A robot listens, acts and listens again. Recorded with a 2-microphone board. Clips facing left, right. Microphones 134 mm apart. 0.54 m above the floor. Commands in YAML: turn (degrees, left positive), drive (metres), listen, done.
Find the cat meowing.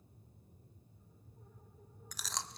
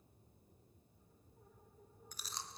listen: true
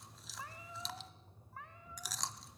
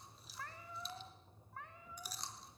turn: 30
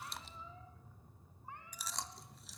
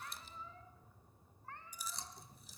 turn: 165
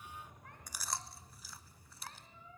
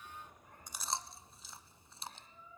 turn: 75
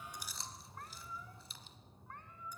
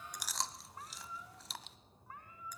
done: "Found it: a cat meowing, straight ahead, 2 to 4 m away."